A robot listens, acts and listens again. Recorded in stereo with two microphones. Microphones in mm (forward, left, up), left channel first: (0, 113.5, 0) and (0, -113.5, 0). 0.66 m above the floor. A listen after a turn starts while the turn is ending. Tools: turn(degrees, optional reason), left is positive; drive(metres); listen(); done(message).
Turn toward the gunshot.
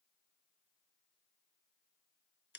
listen()
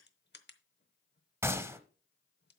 turn(degrees=-30)
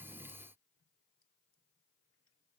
listen()
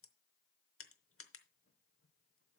done("I heard a gunshot, but can't make it out now. It was about 20° left or 140° right.")